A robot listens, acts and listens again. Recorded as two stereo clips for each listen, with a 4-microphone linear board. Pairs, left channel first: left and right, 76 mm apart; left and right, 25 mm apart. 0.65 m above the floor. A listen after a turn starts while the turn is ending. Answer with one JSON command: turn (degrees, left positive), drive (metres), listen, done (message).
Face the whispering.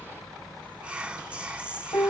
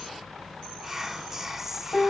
{"turn": -30}
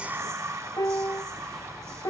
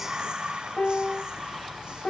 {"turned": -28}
{"turn": -135}
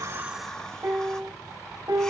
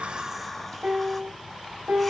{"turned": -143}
{"listen": true}
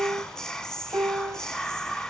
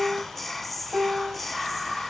{"turn": 10}
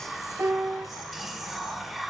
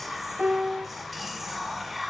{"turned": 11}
{"done": "Found it: whispering, straight ahead."}